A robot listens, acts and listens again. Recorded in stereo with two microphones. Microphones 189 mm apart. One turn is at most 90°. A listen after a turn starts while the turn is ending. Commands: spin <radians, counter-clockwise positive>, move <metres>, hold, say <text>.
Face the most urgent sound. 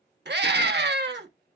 spin -1.13
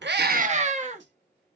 spin -0.70
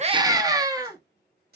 spin -0.35
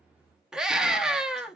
say Facing the scream, 1 to 2 m away.